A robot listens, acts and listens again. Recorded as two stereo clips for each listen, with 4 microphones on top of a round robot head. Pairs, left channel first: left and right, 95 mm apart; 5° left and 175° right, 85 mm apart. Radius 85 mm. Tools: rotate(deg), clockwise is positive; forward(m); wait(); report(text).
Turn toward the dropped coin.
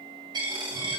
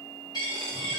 rotate(45)
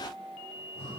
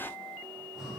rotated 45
report("Facing where the dropped coin came from. I can't hear it now.")